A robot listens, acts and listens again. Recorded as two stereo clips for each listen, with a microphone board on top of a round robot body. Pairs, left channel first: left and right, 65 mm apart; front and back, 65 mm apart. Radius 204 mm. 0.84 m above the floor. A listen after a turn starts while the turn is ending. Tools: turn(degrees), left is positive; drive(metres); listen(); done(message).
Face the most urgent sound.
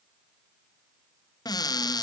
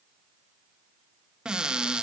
listen()
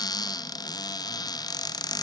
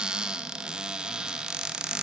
listen()
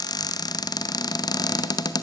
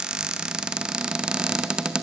done("I can't make out anything urgent, only a cupboard door.")